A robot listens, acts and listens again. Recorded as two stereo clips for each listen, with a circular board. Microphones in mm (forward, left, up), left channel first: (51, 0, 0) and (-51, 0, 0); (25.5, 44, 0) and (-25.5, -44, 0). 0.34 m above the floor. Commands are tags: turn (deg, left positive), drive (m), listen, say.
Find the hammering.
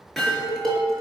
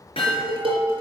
<turn deg="85"/>
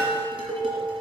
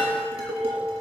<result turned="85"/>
<listen/>
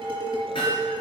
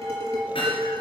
<turn deg="30"/>
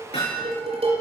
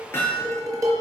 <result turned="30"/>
<say>Found it: hammering, straight ahead.</say>